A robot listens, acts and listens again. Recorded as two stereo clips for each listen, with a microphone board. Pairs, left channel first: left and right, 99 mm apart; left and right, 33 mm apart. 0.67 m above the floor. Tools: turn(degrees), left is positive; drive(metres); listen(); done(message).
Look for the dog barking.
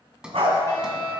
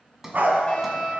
turn(degrees=-90)
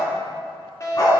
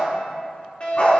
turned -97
turn(degrees=40)
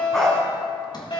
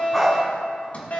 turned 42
done("Facing the dog barking, 2 to 4 m away.")